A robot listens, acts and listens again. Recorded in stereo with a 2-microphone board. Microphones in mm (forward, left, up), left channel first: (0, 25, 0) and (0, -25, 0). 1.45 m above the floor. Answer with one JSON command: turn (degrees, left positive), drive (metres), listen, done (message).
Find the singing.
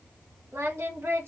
{"turn": -55}
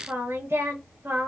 {"turn": -65}
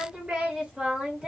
{"turn": -20}
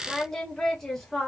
{"done": "Found it: singing, straight ahead, 1 to 2 m away."}